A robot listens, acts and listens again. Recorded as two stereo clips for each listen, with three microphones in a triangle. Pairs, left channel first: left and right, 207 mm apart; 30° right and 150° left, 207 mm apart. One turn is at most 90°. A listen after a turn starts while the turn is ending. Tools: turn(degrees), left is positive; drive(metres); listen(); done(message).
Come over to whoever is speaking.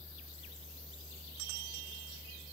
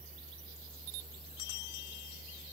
listen()
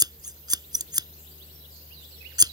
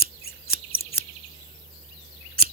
listen()
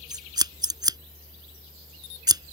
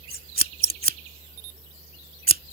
done("I can't make out anyone speaking, only scissors.")